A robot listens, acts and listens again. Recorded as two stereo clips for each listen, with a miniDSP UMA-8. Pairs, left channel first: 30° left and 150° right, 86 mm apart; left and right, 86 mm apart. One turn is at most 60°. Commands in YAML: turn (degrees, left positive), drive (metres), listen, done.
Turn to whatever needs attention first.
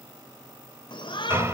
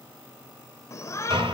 turn: 40
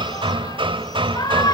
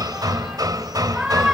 done: "Facing the shout."